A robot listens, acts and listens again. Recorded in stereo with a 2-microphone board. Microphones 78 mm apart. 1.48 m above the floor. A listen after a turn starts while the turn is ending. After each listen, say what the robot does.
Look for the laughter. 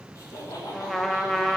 Turn 45° left.
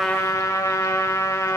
Keep listening.
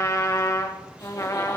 Keep listening.
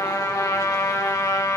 I heard laughter, but can't make it out now. It was about straight ahead or 90° left.